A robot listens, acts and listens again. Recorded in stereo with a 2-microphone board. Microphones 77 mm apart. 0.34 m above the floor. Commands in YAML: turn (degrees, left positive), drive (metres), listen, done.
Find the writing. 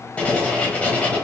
turn: 20
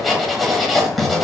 done: "Facing the writing, under 1 m away."